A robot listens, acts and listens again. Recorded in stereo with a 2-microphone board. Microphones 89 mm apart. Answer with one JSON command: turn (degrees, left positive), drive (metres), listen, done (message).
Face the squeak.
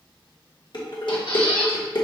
{"turn": 70}
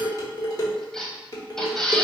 {"done": "Found it: a squeak, straight ahead."}